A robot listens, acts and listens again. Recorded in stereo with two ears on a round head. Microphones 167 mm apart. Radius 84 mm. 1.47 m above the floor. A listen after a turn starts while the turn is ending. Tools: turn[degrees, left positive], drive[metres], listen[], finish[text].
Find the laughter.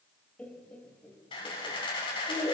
Thought: The laughter: about 20° left or 160° left.
Action: turn[20]
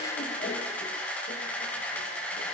Action: listen[]
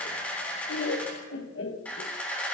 Thought: So it is at 100° left.
Action: turn[100]
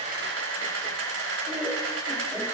Action: listen[]
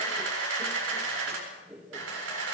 Action: finish[Found it: laughter, straight ahead.]